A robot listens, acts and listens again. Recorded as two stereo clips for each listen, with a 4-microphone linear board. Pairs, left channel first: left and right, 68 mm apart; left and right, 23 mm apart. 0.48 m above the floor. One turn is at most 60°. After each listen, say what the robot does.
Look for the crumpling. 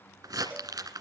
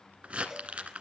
Turn 60° right.
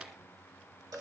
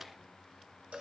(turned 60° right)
Turn 30° right.
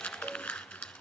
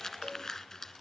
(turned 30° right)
Turn 15° left.
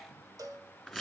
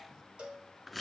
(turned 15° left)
Facing the crumpling, 1 to 2 m away.